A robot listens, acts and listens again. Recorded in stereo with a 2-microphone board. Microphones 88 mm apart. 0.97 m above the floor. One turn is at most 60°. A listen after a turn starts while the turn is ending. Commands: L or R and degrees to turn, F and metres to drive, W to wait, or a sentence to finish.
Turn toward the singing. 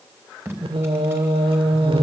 R60
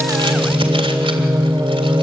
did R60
R40
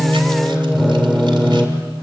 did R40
Facing the singing, 1 to 2 m away.